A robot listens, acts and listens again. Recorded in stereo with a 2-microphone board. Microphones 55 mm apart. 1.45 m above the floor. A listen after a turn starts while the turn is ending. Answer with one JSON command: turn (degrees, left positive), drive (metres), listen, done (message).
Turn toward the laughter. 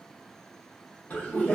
{"turn": 30}
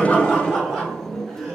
{"done": "Facing the laughter."}